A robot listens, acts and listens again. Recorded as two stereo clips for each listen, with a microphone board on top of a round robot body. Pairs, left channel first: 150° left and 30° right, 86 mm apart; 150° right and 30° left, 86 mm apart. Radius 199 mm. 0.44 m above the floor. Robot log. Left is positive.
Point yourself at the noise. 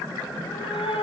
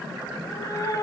note: The cat meowing: 160° left.
cmd yaw +160
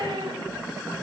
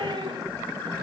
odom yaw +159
end: Found it: a cat meowing, straight ahead, 2 to 4 m away.